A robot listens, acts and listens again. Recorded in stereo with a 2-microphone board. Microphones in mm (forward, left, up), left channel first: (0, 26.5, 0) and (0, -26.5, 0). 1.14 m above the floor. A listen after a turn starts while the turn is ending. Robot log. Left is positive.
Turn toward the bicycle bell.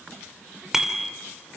cmd yaw -30
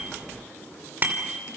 note: So it is at 145° right.
cmd yaw -145
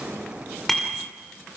end: Facing the bicycle bell.